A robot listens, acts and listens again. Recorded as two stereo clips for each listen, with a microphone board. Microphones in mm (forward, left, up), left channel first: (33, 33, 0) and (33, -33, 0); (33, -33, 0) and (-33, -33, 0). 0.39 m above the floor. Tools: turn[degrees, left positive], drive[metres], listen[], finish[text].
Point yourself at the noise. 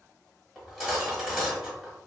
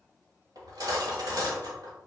Thought: The cutlery clinking: 170° right.
Action: turn[-170]
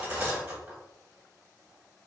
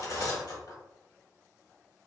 Thought: The cutlery clinking is now 25° right.
Action: turn[-25]
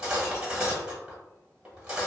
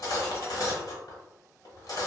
Thought: The cutlery clinking is now 15° right.
Action: turn[-15]
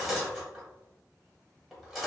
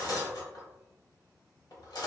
Action: finish[Facing the cutlery clinking, 1 to 2 m away.]